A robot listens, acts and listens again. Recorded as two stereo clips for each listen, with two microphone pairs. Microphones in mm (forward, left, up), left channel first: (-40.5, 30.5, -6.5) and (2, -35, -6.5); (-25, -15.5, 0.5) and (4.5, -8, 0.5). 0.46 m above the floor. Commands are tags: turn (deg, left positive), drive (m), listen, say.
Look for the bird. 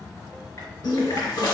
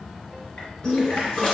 <turn deg="135"/>
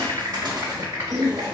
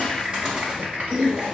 <turn deg="-40"/>
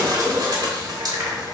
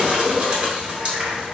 <turn deg="-30"/>
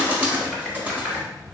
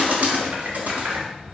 <turn deg="10"/>
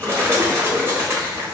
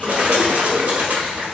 <say>Found it: a bird, straight ahead, under 1 m away.</say>